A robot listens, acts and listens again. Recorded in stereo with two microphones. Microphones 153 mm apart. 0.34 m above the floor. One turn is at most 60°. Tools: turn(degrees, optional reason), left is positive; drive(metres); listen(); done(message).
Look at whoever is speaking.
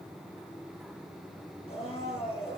listen()
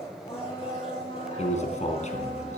turn(degrees=50, reason="The man speaking: about 50° left or 130° left.")
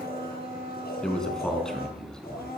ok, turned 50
done("Facing the man speaking.")